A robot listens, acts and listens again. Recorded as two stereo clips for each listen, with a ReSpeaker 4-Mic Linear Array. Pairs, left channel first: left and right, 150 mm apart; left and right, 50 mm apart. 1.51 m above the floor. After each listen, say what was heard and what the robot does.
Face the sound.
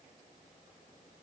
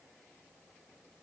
Keep listening.
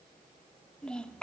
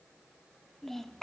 Turn 30° left.
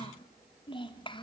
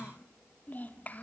So it is at 145° left. Turn 145° left.
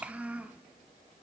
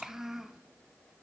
The child speaking is now 10° right. Turn 10° right.
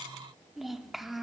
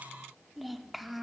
Found it: a child speaking, straight ahead.